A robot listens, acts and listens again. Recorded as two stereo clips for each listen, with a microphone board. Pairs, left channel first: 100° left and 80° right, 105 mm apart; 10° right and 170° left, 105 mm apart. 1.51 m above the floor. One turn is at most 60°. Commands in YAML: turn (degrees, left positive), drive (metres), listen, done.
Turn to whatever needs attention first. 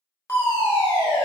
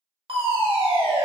turn: 60
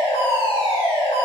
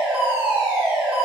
turn: 60
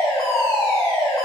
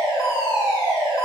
turn: 45
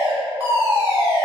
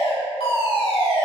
turn: -10
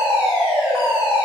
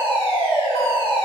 done: "Found it: a fire alarm, straight ahead."